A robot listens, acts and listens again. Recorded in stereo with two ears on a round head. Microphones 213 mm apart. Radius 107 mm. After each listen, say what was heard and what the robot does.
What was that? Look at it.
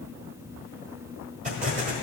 The explosion: about 30° right or 150° right. Turn 30° right.
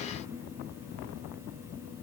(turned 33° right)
Keep listening.
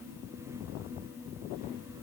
I heard an explosion, but can't make it out now. It was about straight ahead or 115° right.